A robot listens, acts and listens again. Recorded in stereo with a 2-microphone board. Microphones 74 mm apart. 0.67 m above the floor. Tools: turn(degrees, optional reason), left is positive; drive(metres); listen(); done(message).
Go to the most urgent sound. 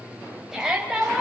turn(degrees=-30)
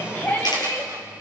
turn(degrees=30, reason="So it is at 30° left.")
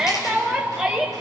drive(metres=1.0)
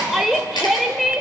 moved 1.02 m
drive(metres=1.0)
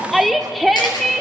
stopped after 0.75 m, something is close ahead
done("I am next to the shout.")